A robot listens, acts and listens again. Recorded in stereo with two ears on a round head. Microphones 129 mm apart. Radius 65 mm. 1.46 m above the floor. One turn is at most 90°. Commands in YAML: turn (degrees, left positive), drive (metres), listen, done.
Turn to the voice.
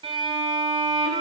listen: true
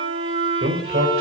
turn: -90
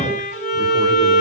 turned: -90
listen: true
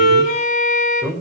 turn: -10
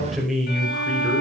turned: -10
done: "Found it: a man speaking, straight ahead, over 4 m away."